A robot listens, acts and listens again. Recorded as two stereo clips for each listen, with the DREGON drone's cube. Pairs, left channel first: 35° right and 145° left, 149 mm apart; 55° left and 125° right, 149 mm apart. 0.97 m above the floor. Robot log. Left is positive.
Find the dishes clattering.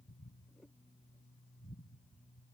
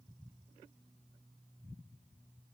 cmd idle
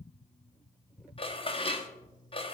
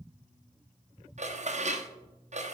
note: The dishes clattering: 85° right.
cmd yaw -85
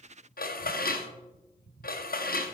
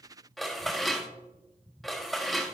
note: The dishes clattering is now 35° right.
cmd yaw -35
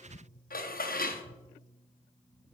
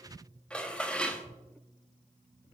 note: The dishes clattering is now 25° right.
cmd yaw -25
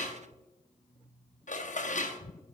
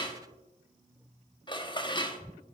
end: Found it: dishes clattering, straight ahead, under 1 m away.